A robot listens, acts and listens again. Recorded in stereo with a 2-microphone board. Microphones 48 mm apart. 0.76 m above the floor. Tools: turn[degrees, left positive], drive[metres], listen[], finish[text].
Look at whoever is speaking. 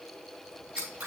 Action: listen[]
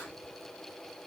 Action: listen[]
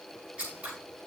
Action: finish[I can't make out anyone speaking, only scissors.]